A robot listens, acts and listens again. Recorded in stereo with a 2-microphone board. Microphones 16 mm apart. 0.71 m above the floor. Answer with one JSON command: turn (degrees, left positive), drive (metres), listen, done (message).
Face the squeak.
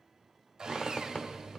{"turn": 90}
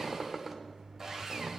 {"done": "Found it: a squeak, straight ahead."}